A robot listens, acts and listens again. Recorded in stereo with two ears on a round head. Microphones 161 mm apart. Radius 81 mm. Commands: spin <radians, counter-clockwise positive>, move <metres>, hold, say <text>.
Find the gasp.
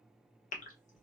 spin 0.70
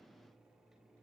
hold
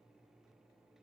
say I heard a gasp, but can't make it out now. It was about straight ahead or 100° left.